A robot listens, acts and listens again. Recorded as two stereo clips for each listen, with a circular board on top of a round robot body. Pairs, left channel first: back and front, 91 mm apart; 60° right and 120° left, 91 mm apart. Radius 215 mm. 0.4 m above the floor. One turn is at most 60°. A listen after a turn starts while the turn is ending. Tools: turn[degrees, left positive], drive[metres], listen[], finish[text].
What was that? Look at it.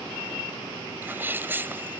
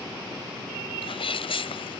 Thought: The sneeze: 70° right.
Action: turn[-60]
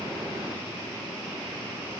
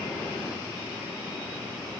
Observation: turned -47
Thought: Nothing new. It was at 20° right.
Action: turn[-20]
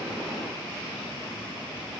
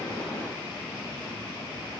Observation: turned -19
Action: finish[Facing where the sneeze came from. I can't hear it now.]